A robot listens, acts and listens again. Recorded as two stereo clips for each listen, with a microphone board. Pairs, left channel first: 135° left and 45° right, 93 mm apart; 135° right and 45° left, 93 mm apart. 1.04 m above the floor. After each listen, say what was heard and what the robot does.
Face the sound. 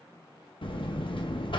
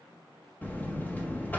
The buzzer: 155° left. Turn 155° left.
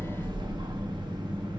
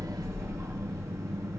The buzzer is now 10° right. Turn 10° right.
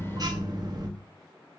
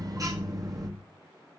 Facing the buzzer, 1 to 2 m away.